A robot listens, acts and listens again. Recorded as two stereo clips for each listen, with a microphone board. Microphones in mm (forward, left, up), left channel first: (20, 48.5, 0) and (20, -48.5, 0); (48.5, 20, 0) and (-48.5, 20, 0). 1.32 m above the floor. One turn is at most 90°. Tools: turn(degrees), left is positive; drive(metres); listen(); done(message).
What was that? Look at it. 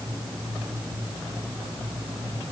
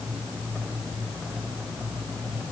listen()
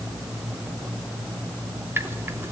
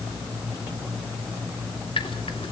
turn(degrees=-25)
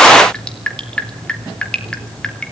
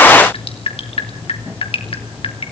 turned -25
turn(degrees=10)
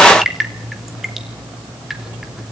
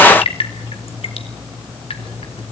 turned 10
done("Found it: dripping, straight ahead.")